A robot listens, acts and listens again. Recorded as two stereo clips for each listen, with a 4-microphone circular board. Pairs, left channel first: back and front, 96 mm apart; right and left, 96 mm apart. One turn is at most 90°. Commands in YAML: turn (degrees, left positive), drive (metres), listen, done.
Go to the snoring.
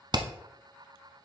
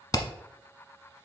listen: true
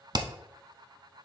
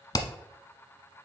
listen: true
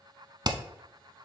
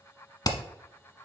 done: "I can't make out snoring to turn to."